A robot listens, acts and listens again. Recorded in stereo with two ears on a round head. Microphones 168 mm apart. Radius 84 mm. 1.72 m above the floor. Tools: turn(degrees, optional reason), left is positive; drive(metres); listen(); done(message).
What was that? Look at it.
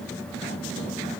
listen()
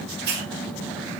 turn(degrees=-60, reason="The hiss: about 60° right or 120° right.")
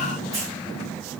listen()
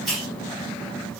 done("Found it: a hiss, straight ahead.")